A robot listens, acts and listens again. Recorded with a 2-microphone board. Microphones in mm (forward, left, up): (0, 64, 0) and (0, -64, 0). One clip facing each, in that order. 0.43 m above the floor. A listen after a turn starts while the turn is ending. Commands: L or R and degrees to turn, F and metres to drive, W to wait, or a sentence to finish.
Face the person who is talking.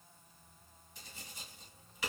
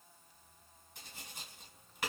W
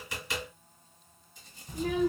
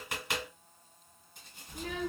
L30
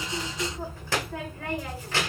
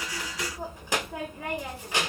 R20
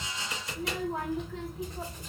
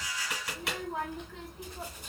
Found it: a child speaking, straight ahead, under 1 m away.